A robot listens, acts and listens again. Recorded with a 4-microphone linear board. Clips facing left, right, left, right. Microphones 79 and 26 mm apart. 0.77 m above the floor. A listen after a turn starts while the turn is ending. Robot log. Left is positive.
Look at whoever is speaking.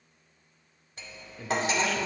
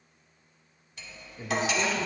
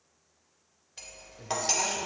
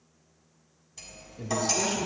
cmd yaw -30
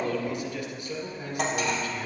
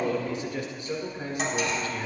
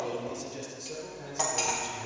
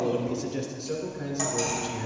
note: So it is at 145° right.
cmd yaw -145
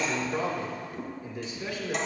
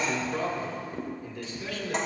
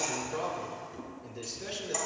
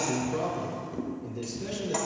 note: The man speaking is now 15° left.
cmd yaw +15
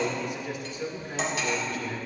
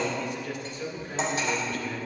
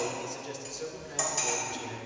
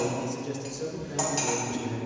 end: Found it: a man speaking, straight ahead.